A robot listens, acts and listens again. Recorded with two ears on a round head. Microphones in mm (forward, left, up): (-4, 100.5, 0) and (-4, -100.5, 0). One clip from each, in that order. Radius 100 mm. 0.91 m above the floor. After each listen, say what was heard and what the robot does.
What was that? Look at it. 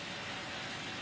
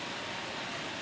Keep listening.
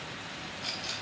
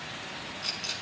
Turn 30° right.
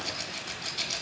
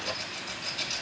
So it is at 20° left. Turn 20° left.
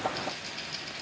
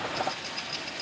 Facing the rattle, 1 to 2 m away.